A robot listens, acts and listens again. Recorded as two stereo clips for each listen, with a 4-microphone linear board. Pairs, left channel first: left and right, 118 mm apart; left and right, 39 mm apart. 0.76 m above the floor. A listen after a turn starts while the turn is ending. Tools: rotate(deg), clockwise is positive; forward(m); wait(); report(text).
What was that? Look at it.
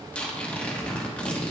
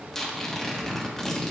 rotate(-30)
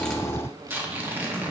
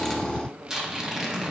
rotate(20)
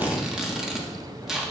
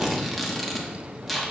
report("Found it: tearing paper, straight ahead.")